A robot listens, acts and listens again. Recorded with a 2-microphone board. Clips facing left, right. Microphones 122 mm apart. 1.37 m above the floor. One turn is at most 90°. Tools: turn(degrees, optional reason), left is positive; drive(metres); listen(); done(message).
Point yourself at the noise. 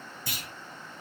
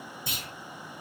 turn(degrees=-25, reason="The clunk: about 25° right or 155° right.")
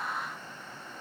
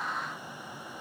listen()
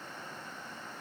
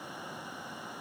done("I heard a clunk, but can't make it out now. It was about straight ahead or 130° right.")